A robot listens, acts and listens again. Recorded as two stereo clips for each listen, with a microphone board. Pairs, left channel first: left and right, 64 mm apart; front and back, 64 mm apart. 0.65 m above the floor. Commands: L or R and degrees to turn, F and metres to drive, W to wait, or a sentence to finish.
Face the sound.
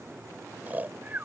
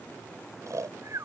R150
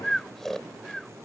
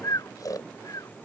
Found it: snoring, straight ahead.